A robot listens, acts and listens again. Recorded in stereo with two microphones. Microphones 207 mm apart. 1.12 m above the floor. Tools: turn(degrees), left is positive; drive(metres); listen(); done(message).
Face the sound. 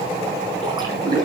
turn(degrees=-20)
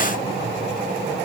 listen()
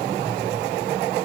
done("I heard a splash, but can't make it out now. It was about straight ahead or 140° right.")